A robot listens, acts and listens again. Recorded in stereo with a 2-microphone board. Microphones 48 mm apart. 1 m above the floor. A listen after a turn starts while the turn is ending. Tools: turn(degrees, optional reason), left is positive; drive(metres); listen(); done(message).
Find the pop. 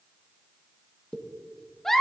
turn(degrees=20, reason="The pop: about 20° left or 160° left.")
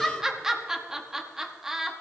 listen()
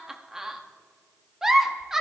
done("I heard a pop, but can't make it out now. It was about straight ahead or 140° left.")